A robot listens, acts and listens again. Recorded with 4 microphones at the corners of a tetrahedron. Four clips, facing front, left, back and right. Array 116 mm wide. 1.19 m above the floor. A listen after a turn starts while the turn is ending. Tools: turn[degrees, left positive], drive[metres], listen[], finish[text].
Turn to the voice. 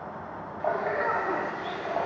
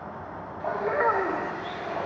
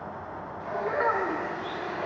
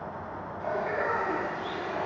Thought: The child speaking: 115° left.
Action: turn[115]
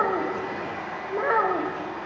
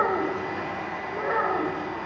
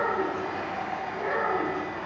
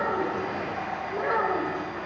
Thought: The child speaking is now 10° right.
Action: turn[-10]
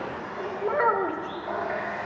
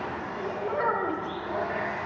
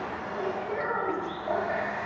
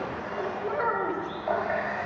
Action: finish[Found it: a child speaking, straight ahead, 2 to 4 m away.]